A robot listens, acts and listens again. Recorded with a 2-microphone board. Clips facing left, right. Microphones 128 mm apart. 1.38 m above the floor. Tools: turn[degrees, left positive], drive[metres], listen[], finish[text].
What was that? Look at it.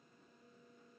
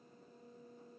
Action: listen[]
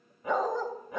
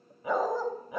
Action: turn[-30]
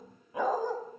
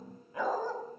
Thought: So it is at 15° left.
Action: turn[15]
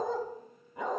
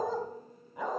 Action: finish[Found it: a dog barking, straight ahead.]